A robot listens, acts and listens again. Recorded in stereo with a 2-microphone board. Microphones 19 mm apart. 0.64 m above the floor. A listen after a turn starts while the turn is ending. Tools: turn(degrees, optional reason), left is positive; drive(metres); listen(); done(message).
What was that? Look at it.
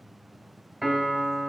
turn(degrees=-15, reason="The piano: about 15° right or 165° right.")
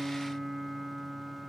done("Found it: a piano, straight ahead.")